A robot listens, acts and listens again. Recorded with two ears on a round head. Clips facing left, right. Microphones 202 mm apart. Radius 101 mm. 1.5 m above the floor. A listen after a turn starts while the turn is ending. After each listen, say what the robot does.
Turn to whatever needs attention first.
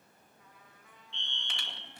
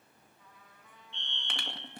Turn 65° left.
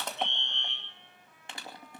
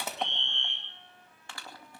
Turn 40° left.
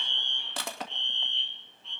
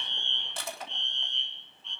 Found it: a fire alarm, straight ahead, 1 to 2 m away.